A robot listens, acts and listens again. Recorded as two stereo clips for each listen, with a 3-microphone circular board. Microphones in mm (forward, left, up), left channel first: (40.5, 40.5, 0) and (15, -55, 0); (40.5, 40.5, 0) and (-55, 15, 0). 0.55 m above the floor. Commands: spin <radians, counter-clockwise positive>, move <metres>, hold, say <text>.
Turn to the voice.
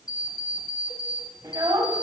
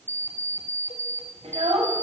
spin -2.79
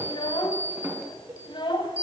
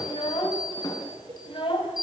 spin 0.70
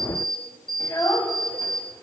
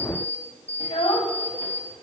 spin 0.26
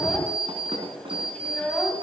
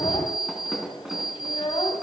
say Facing the child speaking.